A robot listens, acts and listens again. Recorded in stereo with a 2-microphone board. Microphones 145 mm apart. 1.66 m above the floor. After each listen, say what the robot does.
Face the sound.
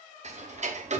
Turn 55° right.
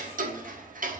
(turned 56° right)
Turn 70° right.
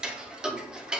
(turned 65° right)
Facing the ticking.